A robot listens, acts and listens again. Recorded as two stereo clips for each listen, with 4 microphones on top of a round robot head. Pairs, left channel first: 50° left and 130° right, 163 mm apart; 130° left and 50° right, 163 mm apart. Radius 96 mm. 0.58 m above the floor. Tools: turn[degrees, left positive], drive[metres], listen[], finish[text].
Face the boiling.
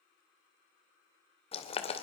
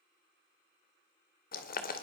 Thought: The boiling: 100° left.
Action: turn[100]
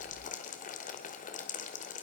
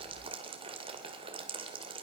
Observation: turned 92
Thought: The boiling is now 10° left.
Action: turn[10]
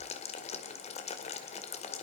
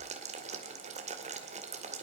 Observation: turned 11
Action: finish[Found it: boiling, straight ahead.]